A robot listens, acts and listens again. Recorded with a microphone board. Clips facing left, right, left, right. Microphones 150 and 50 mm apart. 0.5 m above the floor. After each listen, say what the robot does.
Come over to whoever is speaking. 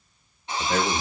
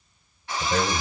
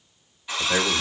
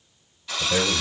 Turn 60° left.
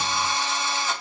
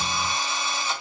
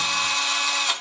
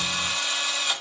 Keep listening.
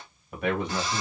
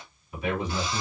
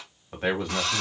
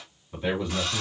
Turn 55° left.
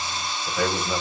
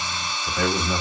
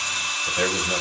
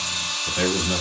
Drive 1.0 m forward.
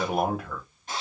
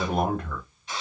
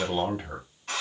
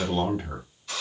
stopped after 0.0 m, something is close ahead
Blocked. The man speaking is further on, straight ahead.